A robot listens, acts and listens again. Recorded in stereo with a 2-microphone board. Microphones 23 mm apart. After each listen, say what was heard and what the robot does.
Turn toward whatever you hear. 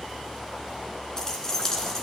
The keys jangling: about 25° left or 155° left. Turn 25° left.
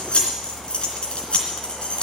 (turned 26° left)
So it is at 125° left. Turn 125° left.
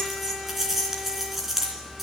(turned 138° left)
The keys jangling is now 10° right. Turn 10° right.
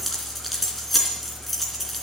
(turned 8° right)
Found it: keys jangling, straight ahead, 2 to 4 m away.